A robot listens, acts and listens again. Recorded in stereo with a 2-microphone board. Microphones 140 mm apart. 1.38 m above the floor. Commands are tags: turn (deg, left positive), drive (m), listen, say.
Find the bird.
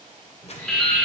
<turn deg="30"/>
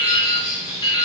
<turn deg="-20"/>
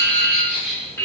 <say>Found it: a bird, straight ahead.</say>